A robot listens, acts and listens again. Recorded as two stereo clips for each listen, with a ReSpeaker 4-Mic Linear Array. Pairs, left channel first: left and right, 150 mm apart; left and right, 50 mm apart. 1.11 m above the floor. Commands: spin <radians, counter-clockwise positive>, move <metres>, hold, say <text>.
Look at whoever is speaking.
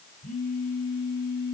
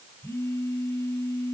hold
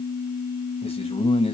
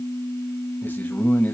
spin 0.70
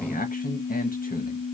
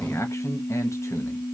spin 1.75
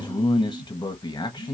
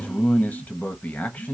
spin 0.52
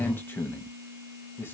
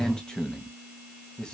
spin 0.26
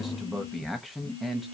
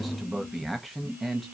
say Found it: a man speaking, straight ahead, 1 to 2 m away.